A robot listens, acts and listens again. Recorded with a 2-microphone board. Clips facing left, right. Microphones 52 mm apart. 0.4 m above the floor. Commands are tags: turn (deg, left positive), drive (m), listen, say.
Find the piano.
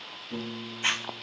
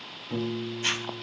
<turn deg="-30"/>
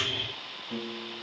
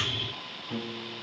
<say>Facing the piano.</say>